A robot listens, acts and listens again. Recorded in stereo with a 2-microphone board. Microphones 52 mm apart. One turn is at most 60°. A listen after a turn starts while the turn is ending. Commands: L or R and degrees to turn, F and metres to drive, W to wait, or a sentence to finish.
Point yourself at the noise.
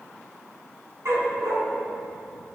R60
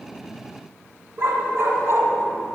R60
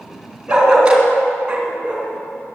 R25
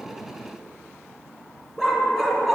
Facing the dog barking, 2 to 4 m away.